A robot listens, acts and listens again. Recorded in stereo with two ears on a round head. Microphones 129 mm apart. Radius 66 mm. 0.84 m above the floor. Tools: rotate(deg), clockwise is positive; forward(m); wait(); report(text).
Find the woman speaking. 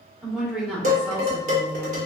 rotate(-30)
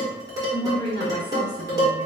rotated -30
rotate(30)
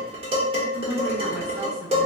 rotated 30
wait()
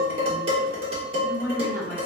rotate(15)
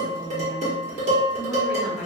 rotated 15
report("Found it: a woman speaking, straight ahead, 1 to 2 m away.")